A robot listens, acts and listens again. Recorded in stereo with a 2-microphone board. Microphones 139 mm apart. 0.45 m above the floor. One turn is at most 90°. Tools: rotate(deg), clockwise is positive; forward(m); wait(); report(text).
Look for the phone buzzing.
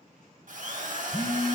rotate(-30)
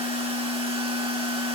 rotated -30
rotate(-90)
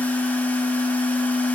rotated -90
rotate(-60)
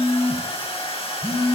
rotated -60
rotate(-30)
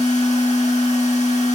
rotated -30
rotate(-10)
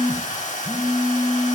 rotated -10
report("Facing the phone buzzing, 1 to 2 m away.")